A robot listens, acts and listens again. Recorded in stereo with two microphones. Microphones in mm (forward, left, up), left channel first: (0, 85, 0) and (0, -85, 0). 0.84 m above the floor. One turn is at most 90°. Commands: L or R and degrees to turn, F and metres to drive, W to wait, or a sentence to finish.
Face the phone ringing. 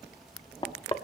W
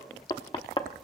W
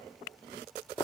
I can't make out a phone ringing to turn to.